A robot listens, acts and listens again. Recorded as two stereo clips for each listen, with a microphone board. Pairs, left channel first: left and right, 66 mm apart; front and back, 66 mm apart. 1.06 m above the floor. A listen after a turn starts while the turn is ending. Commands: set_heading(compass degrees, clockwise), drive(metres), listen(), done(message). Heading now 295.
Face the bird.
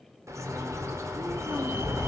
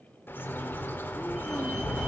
set_heading(350)
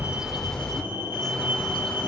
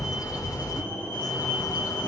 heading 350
done("Facing the bird, 1 to 2 m away.")